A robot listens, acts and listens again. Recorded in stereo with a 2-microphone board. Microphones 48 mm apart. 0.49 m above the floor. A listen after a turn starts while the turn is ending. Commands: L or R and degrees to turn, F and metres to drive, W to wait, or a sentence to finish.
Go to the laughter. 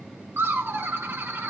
R55
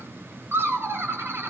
R65
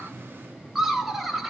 R10
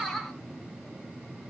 F1.0
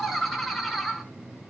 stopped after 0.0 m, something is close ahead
Something is in my way. I am facing the laughter but have not reached it.